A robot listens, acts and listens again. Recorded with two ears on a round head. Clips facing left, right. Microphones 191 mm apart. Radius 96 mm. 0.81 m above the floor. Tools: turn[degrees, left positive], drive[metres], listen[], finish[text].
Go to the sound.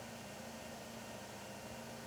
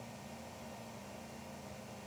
Action: listen[]
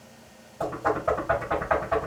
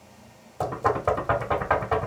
Thought: The knocking: about 60° right or 120° right.
Action: turn[-60]
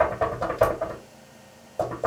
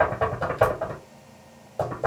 Action: drive[1.0]
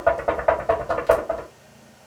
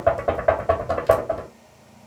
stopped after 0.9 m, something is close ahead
Thought: The knocking is now 10° right.
Action: turn[-10]
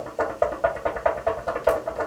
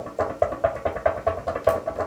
Action: finish[I am next to the knocking.]